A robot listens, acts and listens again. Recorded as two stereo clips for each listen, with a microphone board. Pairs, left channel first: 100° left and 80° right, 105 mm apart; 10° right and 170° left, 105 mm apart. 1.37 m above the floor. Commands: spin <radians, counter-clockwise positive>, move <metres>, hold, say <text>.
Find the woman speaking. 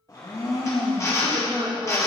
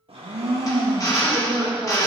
spin -2.01
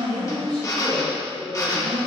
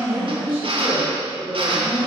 say Facing the woman speaking, 2 to 4 m away.